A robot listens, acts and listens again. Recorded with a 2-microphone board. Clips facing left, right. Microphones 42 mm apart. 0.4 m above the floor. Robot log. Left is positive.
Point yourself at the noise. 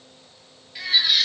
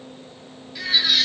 cmd yaw +30
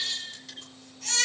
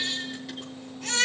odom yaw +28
note: So it is at 15° right.
cmd yaw -15
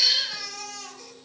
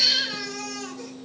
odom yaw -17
end: Facing the baby crying.